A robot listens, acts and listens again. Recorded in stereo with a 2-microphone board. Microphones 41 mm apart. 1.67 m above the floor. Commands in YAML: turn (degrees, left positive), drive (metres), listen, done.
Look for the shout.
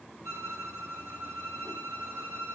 listen: true
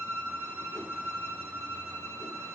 listen: true
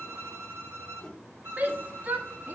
turn: -45
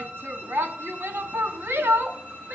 turn: -85
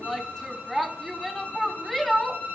done: "Found it: a shout, straight ahead."